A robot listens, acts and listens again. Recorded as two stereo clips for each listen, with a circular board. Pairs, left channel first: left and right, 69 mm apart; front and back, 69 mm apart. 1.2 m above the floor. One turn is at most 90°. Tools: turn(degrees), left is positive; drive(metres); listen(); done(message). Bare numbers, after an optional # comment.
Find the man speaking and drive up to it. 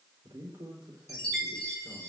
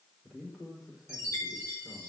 # The man speaking: 95° right.
turn(-90)
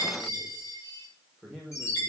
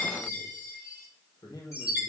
drive(1.0)
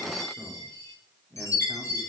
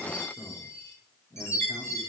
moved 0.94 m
drive(1.0)
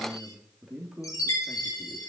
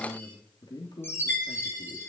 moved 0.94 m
# The man speaking is now 10° right.
turn(-10)
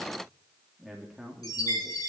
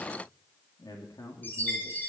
drive(1.0)
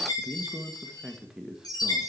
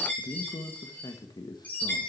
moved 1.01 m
drive(1.0)
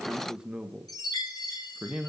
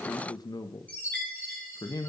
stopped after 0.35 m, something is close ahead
# The man speaking is now 10° right.
turn(-10)
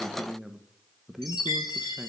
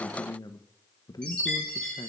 done("Arrived at the man speaking, straight ahead.")